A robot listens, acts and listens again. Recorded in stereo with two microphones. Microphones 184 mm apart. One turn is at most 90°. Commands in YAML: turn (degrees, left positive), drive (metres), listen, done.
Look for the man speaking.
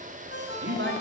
turn: -90
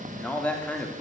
turn: 10
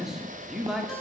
done: "Facing the man speaking, 2 to 4 m away."